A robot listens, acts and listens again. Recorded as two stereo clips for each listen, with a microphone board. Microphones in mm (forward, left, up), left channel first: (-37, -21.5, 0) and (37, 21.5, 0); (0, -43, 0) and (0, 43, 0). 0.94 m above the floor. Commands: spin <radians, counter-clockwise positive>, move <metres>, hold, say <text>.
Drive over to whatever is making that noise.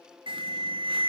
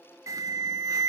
spin 0.70
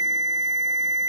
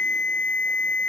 spin -0.26
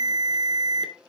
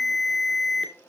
move 1.0
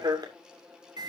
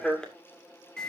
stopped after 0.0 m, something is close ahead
spin -0.17
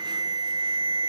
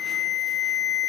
say Something is in my way. I am facing the alarm but have not reached it.